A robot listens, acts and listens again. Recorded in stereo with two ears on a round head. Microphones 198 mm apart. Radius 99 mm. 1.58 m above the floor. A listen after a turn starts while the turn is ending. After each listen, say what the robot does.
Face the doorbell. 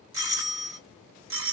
Turn 60° right.
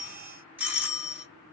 Turn 10° right.
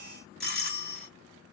Found it: a doorbell, straight ahead, 2 to 4 m away.